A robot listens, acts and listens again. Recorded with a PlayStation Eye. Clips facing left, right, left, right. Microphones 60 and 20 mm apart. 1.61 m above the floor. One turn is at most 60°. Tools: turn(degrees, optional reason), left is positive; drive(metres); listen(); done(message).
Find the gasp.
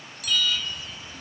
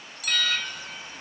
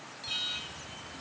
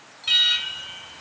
listen()
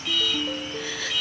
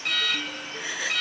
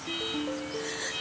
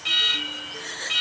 turn(degrees=-15, reason="The gasp: about 15° right or 165° right.")
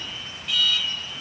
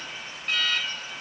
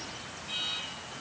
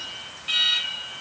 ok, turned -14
listen()
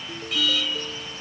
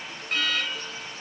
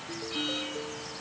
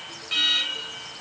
done("I heard a gasp, but can't make it out now. It was about 5° right or 150° right.")